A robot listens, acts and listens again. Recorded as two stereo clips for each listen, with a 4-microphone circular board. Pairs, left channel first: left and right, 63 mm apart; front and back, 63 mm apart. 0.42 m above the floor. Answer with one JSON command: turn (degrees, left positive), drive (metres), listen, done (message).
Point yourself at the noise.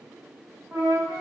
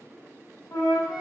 {"turn": -20}
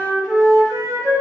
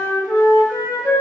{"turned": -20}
{"done": "Facing the flute."}